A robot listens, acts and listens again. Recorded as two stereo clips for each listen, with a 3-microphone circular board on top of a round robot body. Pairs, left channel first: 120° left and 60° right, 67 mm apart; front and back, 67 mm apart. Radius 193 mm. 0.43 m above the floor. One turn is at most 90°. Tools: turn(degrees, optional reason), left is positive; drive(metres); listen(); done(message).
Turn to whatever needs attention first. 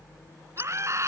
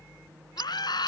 turn(degrees=-15, reason="The scream: 15° right.")
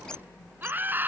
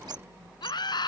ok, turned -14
done("Found it: a scream, straight ahead.")